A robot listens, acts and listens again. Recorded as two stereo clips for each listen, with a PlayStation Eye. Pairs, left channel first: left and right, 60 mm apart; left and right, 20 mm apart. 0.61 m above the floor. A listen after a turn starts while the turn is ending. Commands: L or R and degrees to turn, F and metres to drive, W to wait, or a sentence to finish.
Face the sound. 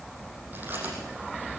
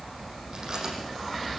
R30
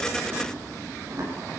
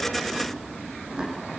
R125
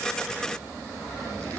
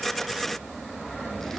W
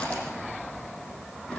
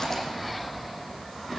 W
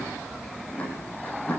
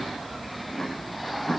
L20
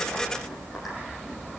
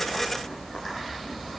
W
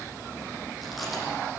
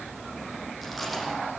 Facing the chewing.